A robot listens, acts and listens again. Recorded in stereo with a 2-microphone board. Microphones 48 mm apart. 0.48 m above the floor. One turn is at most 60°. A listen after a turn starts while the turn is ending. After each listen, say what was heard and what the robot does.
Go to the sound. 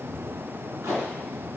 Turn 60° right.
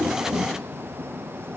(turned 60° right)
Nothing new. It was at 30° right. Turn 30° right.
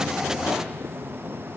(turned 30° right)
Keep listening.
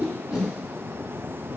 Drive 1.0 m forward.
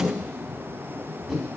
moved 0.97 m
Drive 1.0 m forward.
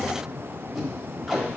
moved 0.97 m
Drive 1.0 m forward.
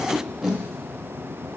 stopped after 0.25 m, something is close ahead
The tape being pulled is now 10° right. Turn 10° right.
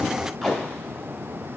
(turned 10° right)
Arrived at the tape being pulled, straight ahead.